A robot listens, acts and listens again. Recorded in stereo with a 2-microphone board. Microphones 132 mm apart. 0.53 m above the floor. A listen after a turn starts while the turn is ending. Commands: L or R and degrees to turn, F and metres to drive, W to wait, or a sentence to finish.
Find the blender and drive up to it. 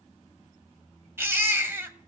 W
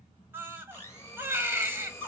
L20
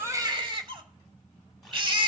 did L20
W
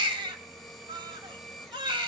F1.0
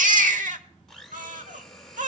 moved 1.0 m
F1.0
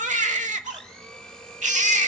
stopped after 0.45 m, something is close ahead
L10
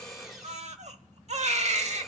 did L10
I am next to the blender.